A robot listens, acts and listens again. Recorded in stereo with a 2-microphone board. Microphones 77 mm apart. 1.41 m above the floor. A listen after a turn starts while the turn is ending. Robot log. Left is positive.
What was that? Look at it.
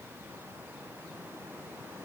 cmd idle
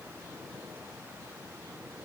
cmd idle
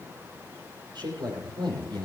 cmd yaw -90
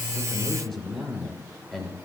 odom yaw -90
end: Found it: a man speaking, straight ahead, over 4 m away.